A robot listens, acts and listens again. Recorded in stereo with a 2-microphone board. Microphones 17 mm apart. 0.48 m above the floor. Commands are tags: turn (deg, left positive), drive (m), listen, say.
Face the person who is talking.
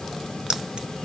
<listen/>
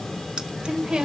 <turn deg="-60"/>
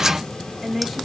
<turn deg="-10"/>
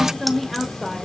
<say>Facing the woman speaking, 1 to 2 m away.</say>